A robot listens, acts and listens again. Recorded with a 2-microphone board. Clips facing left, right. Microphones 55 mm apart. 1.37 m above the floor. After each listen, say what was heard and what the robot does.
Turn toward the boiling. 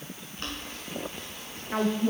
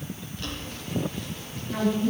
The boiling: about 45° left or 135° left. Turn 45° left.
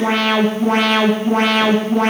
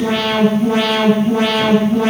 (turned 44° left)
Keep listening.
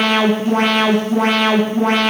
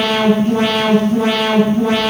Keep listening.
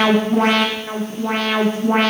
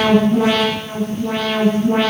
I heard boiling, but can't make it out now. It was about 5° left or 90° left.